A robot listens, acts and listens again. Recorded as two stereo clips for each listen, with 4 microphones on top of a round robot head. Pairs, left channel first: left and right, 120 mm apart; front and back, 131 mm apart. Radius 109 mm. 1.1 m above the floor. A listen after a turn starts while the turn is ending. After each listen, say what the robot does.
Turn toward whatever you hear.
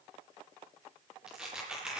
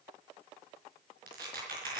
Turn 175° right.
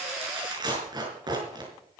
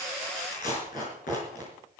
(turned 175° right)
Turn 35° right.
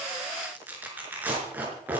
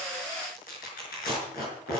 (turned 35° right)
Turn 15° right.
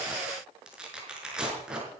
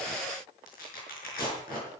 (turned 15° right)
Facing the tearing paper.